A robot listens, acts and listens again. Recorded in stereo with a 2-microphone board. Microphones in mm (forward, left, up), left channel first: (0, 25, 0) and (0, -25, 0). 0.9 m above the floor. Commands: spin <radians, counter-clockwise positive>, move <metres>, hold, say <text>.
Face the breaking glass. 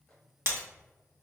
spin -0.87
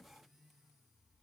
hold
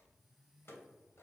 say I heard breaking glass, but can't make it out now. It was about straight ahead or 80° right.